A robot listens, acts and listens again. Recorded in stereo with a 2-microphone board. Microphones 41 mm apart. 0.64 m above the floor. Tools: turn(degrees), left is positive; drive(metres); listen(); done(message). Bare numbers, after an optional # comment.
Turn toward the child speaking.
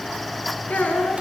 # The child speaking: about 40° left or 140° left.
turn(40)
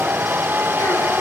listen()
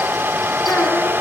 listen()
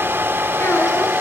done("I heard a child speaking, but can't make it out now. It was about straight ahead or 100° left.")